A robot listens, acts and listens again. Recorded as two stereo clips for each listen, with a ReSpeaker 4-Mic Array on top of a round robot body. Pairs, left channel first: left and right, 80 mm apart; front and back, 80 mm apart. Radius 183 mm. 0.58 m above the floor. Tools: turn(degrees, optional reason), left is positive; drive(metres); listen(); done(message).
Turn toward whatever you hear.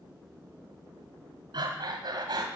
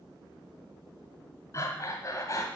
turn(degrees=-55, reason="The breathing: 55° right.")
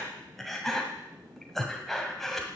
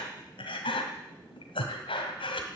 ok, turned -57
done("Found it: breathing, straight ahead, 1 to 2 m away.")